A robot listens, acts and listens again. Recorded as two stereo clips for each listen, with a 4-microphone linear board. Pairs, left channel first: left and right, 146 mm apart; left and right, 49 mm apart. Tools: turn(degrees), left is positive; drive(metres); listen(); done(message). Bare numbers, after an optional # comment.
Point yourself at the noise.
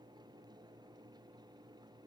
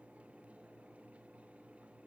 listen()
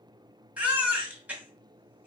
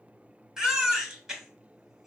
turn(-30)
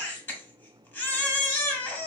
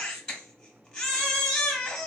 # So it is at 15° left.
turn(15)
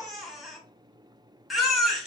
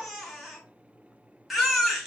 done("Found it: a baby crying, straight ahead, under 1 m away.")